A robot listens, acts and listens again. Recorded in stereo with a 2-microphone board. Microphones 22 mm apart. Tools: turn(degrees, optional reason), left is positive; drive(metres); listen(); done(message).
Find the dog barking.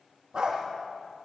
turn(degrees=-35, reason="The dog barking: about 35° right or 145° right.")
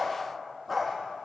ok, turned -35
done("Found it: a dog barking, straight ahead, over 4 m away.")